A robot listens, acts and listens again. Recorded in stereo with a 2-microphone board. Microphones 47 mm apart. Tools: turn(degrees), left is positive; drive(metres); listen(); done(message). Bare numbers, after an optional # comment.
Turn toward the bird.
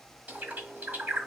# The bird: about 45° right or 135° right.
turn(-45)
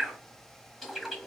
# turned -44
# So it is at 10° right.
turn(-10)
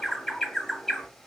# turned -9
done("Facing the bird, 1 to 2 m away.")